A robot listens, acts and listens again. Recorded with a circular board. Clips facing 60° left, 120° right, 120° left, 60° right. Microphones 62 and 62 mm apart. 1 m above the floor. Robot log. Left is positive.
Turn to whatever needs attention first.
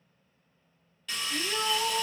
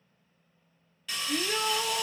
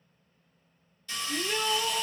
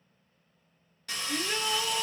note: The shout: 145° right.
cmd yaw -145
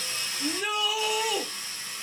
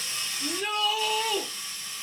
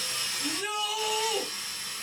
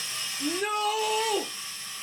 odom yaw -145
note: The shout is now 15° right.
cmd yaw -15
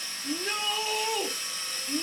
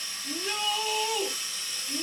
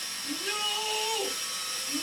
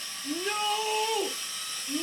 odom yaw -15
end: Found it: a shout, straight ahead.